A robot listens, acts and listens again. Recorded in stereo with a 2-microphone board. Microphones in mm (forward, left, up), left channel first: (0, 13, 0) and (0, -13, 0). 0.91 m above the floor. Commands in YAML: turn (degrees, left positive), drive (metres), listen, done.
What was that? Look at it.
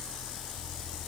listen: true
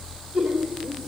turn: -45
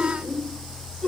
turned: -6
listen: true
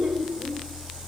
turn: -35
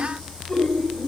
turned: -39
turn: 10
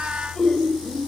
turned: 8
done: "Facing the laughter."